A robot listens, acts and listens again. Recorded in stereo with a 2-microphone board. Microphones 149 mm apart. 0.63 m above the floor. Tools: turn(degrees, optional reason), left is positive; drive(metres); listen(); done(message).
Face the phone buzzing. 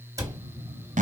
turn(degrees=-25, reason="The phone buzzing: about 25° right or 155° right.")
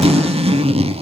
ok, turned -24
listen()
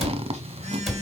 turn(degrees=-130, reason="So it is at 130° right.")
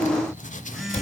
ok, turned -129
done("Facing the phone buzzing, 2 to 4 m away.")